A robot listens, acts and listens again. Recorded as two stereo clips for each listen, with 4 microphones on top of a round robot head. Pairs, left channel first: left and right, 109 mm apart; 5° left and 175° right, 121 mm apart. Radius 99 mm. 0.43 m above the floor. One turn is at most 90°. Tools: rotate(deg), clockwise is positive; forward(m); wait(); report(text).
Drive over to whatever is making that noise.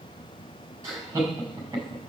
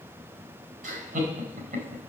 rotate(90)
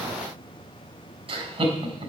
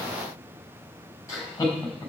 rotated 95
rotate(65)
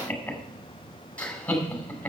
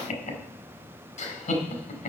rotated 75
rotate(-10)
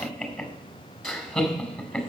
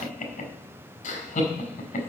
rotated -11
forward(1.0)
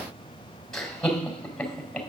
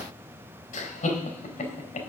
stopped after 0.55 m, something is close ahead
report("Something is in my way. I am facing the laughter but have not reached it.")